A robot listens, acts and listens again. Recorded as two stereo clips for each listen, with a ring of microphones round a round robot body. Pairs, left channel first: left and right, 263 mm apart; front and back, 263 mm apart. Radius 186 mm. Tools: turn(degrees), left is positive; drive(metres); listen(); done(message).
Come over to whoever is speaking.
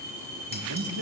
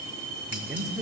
turn(degrees=-90)
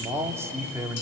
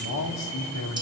turn(degrees=-10)
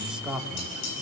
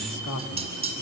drive(metres=1.0)
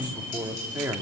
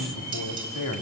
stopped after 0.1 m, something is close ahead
turn(degrees=-10)
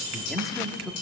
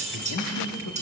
done("Blocked. The man speaking is further on, straight ahead.")